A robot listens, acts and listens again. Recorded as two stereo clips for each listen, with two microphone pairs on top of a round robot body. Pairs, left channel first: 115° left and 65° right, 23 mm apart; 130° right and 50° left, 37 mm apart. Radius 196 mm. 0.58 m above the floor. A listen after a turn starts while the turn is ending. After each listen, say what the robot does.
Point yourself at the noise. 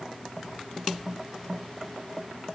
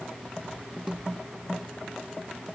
Keep listening.
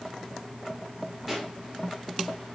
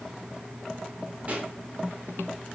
Turn 15° left.
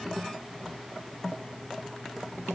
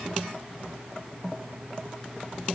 Facing where the pop came from. I can't hear it now.